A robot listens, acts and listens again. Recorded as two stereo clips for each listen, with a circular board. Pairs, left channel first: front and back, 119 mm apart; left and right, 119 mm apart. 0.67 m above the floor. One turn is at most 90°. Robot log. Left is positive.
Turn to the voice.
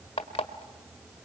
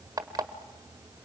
cmd idle
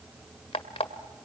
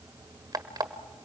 cmd idle
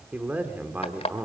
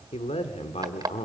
note: The man speaking: 105° left.
cmd yaw +90
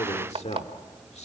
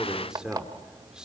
end: Found it: a man speaking, straight ahead, 1 to 2 m away.